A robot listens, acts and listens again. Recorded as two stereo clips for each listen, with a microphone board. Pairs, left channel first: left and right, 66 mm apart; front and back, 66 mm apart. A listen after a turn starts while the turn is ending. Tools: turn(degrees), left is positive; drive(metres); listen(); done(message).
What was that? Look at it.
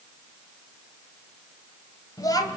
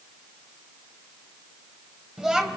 turn(degrees=100)
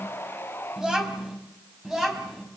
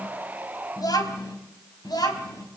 done("Found it: a child speaking, straight ahead, over 4 m away.")